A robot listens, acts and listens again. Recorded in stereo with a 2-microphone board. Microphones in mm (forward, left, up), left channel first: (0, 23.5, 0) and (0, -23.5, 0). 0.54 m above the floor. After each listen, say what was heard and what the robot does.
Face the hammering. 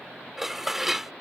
Keep listening.
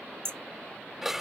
The hammering: about 65° right or 115° right. Turn 65° right.
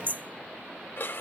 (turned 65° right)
So it is at 45° right. Turn 45° right.
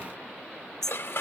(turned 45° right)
The hammering is now 10° left. Turn 10° left.
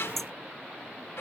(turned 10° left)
Facing the hammering.